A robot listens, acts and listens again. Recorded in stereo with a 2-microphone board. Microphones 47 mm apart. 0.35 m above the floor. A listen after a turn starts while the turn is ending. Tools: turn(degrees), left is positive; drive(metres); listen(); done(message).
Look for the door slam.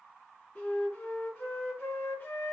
listen()
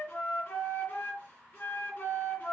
listen()
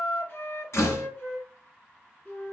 turn(degrees=75)
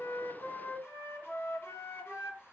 listen()
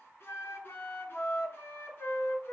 done("I heard a door slam, but can't make it out now. It was about straight ahead or 30° left.")